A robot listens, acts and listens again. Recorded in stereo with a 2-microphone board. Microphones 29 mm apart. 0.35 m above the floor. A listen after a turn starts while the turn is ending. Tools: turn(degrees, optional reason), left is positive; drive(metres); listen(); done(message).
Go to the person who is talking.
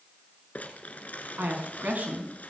turn(degrees=-70, reason="The woman speaking: about 70° right or 110° right.")
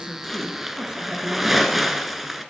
turn(degrees=-20, reason="So it is at 20° right.")
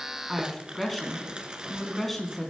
drive(metres=1.0)
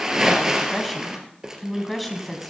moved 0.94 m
drive(metres=1.0)
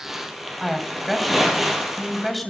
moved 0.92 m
drive(metres=1.0)
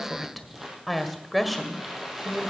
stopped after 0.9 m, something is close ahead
done("I am next to the woman speaking.")